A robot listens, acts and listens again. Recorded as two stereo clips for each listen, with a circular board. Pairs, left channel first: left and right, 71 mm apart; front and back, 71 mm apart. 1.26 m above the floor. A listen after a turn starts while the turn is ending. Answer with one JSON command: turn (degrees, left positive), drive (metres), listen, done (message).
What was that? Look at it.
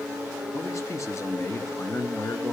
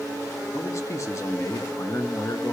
{"turn": 35}
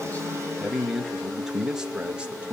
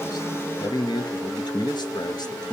{"turn": -20}
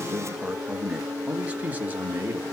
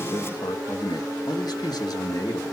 {"turn": -30}
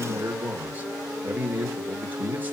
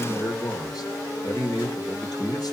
{"turn": -25}
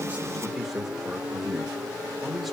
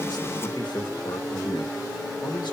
{"done": "Facing the man speaking."}